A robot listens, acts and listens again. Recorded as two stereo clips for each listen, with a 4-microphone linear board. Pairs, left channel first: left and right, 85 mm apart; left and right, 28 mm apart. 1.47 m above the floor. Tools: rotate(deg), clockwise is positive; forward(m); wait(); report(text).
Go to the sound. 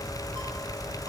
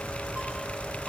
wait()
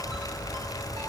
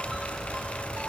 wait()
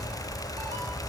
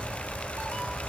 report("I can't make out anything.")